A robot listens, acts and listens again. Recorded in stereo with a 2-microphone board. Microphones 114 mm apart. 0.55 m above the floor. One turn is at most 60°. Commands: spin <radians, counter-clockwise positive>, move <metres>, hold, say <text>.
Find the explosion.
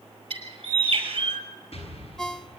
spin 1.05
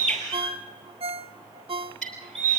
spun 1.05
hold
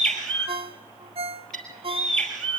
say I heard an explosion, but can't make it out now. It was about 5° left or 55° left.